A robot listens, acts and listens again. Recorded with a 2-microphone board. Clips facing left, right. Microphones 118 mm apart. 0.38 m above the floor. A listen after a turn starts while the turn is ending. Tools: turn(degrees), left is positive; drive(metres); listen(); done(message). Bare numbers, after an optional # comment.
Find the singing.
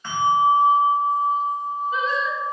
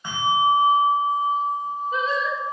# The singing: about 40° right or 140° right.
turn(-40)
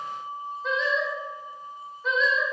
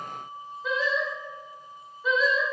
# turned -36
done("Found it: singing, straight ahead.")